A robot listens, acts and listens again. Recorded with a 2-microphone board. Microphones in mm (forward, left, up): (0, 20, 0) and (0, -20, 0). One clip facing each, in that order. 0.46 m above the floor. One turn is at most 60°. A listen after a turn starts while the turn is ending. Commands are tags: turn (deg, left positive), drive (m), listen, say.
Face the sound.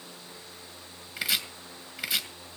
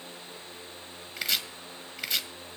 <turn deg="30"/>
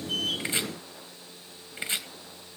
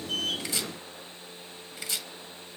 <turn deg="60"/>
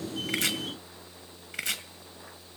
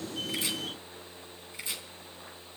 <turn deg="60"/>
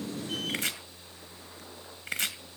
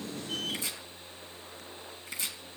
<turn deg="60"/>
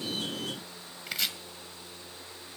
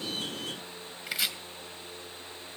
<say>Found it: chopping, straight ahead.</say>